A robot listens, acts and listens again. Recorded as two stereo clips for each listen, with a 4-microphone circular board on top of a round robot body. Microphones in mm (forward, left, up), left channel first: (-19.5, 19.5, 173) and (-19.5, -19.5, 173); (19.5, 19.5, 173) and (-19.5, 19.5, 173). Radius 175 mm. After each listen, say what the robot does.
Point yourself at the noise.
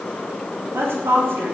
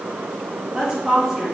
Turn 100° right.
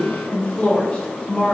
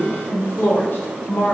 Turn 25° left.
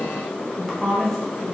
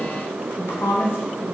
Facing the woman speaking.